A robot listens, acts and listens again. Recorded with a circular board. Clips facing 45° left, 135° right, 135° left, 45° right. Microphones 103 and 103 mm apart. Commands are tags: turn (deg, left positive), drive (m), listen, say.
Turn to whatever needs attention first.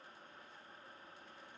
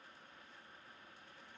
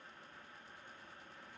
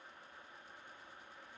<listen/>
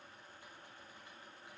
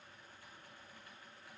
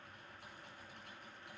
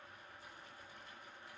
<listen/>
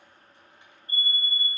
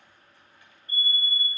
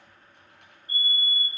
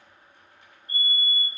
<turn deg="-10"/>
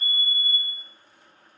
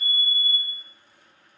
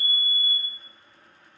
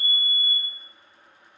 <say>Found it: a fire alarm, straight ahead, over 4 m away.</say>